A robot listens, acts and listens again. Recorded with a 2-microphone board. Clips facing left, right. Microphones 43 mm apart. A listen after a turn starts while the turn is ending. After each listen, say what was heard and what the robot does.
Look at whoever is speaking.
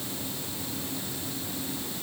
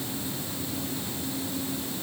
Keep listening.
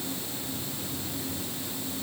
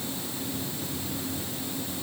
Keep listening.
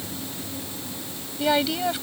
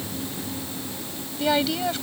Turn 30° left.
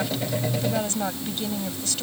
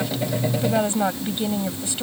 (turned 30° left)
So it is at 20° right. Turn 20° right.
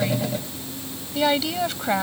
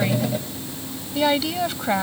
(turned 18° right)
Facing the woman speaking.